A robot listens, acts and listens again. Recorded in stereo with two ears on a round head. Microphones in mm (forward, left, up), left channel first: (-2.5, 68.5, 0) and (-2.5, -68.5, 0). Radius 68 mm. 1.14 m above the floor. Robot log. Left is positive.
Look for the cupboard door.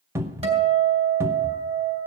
note: The cupboard door: about 20° right or 160° right.
cmd yaw -20
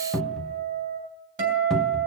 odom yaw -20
end: Facing the cupboard door.